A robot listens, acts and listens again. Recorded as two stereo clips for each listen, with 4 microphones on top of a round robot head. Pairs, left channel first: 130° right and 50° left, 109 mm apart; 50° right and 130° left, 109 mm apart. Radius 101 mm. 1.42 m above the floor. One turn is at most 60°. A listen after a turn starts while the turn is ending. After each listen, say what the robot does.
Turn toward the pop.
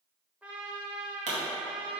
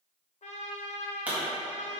Turn 55° left.
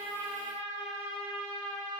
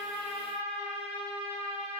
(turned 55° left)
I heard a pop from this way, but can't make it out now.